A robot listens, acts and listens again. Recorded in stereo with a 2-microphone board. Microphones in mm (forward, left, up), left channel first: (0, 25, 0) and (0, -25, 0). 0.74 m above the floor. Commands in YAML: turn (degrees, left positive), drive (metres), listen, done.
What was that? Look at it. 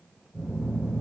turn: -40
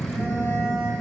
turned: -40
turn: -100
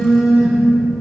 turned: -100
done: "Facing the phone buzzing, 1 to 2 m away."